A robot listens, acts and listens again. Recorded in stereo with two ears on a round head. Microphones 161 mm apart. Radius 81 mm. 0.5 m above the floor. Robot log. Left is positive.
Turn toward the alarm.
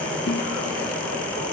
cmd idle
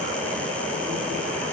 cmd idle
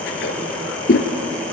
end: I can't make out an alarm, only a toilet flushing.